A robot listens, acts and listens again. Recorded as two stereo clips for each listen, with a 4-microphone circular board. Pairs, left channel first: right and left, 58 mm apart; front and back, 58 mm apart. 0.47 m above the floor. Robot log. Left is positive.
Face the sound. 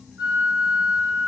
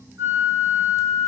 note: The flute: 145° left.
cmd yaw +145
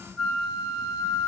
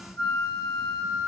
note: The flute is now 15° left.
cmd yaw +15
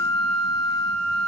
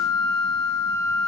end: Facing the flute.